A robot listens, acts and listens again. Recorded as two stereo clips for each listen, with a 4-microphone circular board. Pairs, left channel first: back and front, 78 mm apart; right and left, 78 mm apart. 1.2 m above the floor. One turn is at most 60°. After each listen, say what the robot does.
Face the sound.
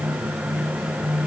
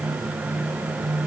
Keep listening.
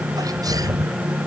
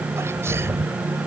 Turn 35° left.
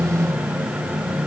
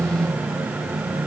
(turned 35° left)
I heard a sneeze from this way, but can't make it out now.